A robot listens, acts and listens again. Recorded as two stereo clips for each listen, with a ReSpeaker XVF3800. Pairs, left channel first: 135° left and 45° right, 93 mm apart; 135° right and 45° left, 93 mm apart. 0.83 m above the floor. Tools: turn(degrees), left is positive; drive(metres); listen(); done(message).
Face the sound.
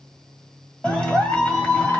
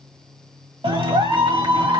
turn(degrees=55)
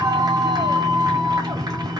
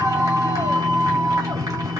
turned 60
done("Facing the clap.")